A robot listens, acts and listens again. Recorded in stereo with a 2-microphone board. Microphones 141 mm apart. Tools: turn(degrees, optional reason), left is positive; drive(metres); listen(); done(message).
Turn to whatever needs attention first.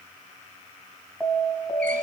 turn(degrees=30)
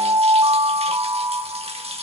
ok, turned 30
turn(degrees=-25, reason="So it is at 25° right.")
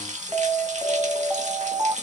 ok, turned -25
turn(degrees=-10, reason="The alarm is now 10° right.")
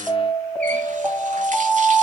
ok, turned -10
done("Facing the alarm, 2 to 4 m away.")